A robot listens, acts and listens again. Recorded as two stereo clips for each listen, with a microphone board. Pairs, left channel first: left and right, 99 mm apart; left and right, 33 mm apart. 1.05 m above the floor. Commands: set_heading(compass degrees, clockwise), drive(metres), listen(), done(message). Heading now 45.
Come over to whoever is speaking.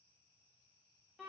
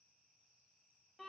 listen()
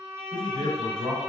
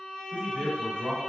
set_heading(95)
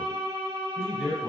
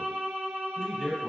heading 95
drive(1.0)
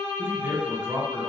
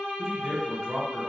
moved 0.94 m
set_heading(110)
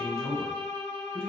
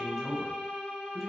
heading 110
drive(1.0)
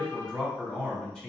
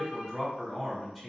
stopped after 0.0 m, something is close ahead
done("Arrived at the man speaking, straight ahead.")